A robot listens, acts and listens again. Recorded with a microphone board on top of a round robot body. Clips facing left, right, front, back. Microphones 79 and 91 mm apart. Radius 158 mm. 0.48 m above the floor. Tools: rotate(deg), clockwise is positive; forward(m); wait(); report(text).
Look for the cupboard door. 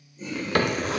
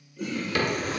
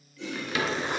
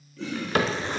rotate(-135)
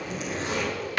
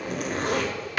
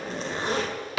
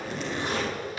report("Found it: a cupboard door, straight ahead.")